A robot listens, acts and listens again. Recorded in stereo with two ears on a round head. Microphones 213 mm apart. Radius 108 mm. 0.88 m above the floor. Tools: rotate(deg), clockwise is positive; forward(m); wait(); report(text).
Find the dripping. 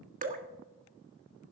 rotate(35)
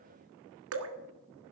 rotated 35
rotate(110)
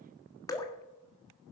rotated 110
rotate(-15)
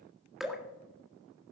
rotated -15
report("Facing the dripping.")